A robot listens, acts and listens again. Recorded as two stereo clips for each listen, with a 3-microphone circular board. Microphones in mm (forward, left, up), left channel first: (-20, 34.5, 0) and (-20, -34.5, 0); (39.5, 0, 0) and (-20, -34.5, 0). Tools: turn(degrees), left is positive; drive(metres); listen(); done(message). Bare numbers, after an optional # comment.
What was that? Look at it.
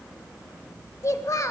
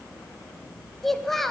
# The child speaking: 115° left.
turn(115)
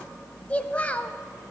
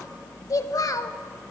# The child speaking is now 25° left.
turn(25)
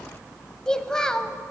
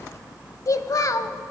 # The child speaking is now 10° left.
turn(10)
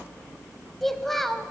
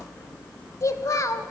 done("Facing the child speaking, under 1 m away.")